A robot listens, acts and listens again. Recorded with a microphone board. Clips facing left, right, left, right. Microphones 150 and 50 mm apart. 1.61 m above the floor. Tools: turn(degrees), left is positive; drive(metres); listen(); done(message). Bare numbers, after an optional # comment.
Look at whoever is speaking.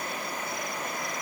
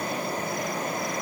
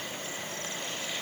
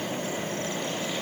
listen()
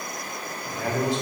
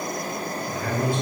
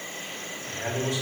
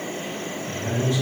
turn(90)
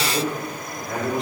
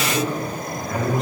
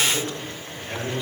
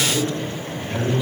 done("Facing the man speaking, 2 to 4 m away.")